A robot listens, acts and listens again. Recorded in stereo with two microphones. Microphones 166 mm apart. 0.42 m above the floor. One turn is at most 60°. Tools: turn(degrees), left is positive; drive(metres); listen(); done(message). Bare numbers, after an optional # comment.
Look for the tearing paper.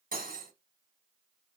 listen()
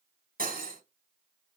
listen()
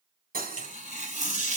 # The tearing paper: about 50° left or 130° left.
turn(50)
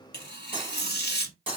# So it is at 80° left.
turn(60)
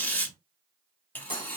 # The tearing paper is now 10° left.
turn(10)
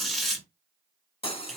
done("Facing the tearing paper.")